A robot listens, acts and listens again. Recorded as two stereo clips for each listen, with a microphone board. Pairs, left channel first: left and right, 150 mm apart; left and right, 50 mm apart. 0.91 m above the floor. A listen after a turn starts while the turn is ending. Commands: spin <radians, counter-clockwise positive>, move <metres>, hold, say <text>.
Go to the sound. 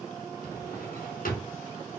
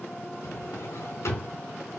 spin 1.22
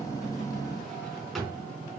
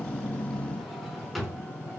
move 1.0
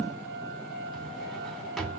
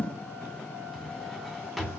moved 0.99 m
move 1.0
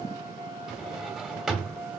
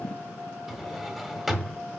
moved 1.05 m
move 1.0
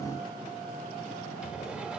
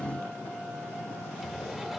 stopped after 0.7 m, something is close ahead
say Arrived at the drawer, straight ahead.